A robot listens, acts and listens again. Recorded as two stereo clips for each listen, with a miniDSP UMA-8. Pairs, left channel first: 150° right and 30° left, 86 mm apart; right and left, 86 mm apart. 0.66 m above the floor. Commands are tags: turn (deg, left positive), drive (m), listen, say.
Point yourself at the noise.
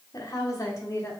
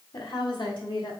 <turn deg="-95"/>
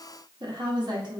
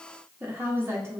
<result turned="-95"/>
<turn deg="35"/>
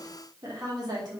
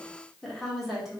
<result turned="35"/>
<say>Facing the woman speaking.</say>